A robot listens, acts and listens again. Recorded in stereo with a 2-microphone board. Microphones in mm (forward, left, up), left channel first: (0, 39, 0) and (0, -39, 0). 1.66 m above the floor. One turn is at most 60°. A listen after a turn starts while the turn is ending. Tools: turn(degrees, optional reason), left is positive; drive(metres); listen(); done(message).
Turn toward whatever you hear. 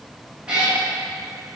turn(degrees=-30)
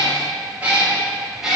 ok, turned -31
turn(degrees=-30)
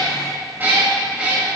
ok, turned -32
turn(degrees=-30)
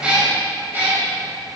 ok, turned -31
turn(degrees=-60, reason="So it is at 155° right.")
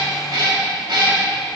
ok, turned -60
turn(degrees=-60, reason="The cat meowing is now 115° right.")
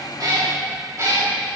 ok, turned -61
turn(degrees=-35, reason="The cat meowing is now 35° right.")
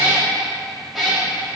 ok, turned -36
done("Facing the cat meowing, 2 to 4 m away.")